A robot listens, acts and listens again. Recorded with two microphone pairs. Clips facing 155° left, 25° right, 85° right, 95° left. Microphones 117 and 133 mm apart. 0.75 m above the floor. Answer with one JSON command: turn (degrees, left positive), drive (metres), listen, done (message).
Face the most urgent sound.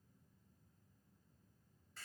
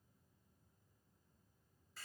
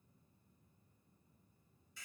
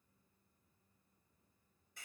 {"listen": true}
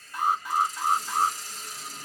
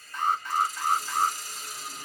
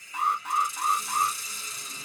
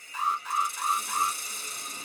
{"turn": -125}
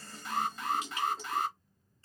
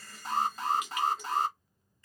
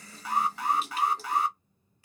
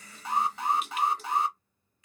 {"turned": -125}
{"turn": 30}
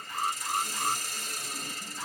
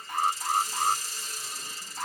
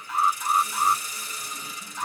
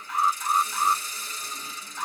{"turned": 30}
{"done": "Facing the alarm."}